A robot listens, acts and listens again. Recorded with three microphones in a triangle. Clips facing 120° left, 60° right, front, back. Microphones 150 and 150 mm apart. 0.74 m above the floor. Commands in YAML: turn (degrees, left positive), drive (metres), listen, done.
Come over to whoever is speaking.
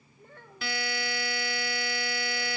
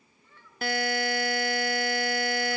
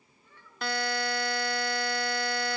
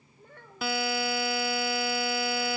turn: 150
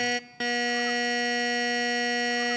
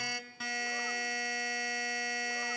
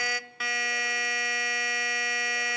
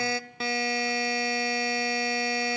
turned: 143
listen: true
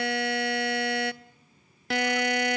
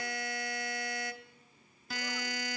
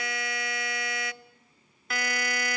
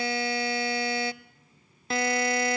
listen: true
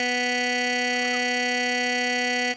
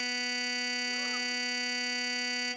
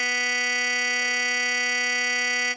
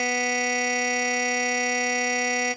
done: "Facing where the child speaking came from. I can't hear it now. I did not reach it."